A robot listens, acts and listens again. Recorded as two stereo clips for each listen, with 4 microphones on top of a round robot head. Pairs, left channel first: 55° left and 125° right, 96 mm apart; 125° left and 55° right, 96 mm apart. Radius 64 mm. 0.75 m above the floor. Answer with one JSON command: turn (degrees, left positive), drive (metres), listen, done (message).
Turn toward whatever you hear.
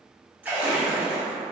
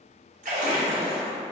{"turn": -50}
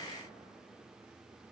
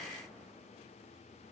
{"done": "Facing where the splash came from. I can't hear it now."}